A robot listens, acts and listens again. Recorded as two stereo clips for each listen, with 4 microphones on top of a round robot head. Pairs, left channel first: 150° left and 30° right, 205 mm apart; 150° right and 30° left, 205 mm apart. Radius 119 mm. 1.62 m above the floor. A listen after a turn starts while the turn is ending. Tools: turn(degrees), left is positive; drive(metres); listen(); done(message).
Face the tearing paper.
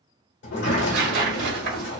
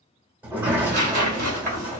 turn(degrees=10)
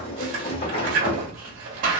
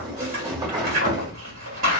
done("Found it: tearing paper, straight ahead, 1 to 2 m away.")